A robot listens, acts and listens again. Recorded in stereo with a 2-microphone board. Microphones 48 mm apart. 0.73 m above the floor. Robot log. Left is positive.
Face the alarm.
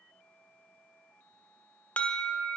note: The alarm: about 30° left or 150° left.
cmd yaw +30
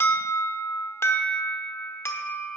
note: So it is at 115° left.
cmd yaw +115
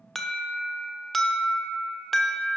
end: Found it: an alarm, straight ahead, 1 to 2 m away.